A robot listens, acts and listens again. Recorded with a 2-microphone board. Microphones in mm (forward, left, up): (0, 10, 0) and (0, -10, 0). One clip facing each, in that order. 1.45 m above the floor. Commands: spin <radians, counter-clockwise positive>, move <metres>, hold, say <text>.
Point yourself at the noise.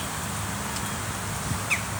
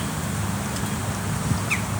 hold
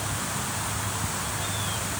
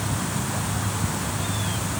hold
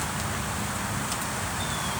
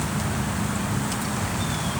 say I can't make out anything.